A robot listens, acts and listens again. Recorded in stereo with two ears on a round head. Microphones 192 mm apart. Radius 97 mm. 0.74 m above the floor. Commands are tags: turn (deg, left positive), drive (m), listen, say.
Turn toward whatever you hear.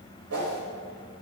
<turn deg="-70"/>
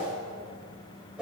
<say>Facing the whoosh.</say>